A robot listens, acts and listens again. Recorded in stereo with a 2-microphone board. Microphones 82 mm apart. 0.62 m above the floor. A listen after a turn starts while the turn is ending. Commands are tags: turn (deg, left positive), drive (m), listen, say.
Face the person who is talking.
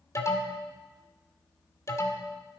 <listen/>
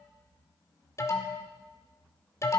<listen/>
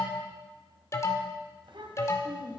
<turn deg="-90"/>
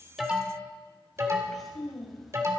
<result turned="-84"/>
<say>Found it: a child speaking, straight ahead.</say>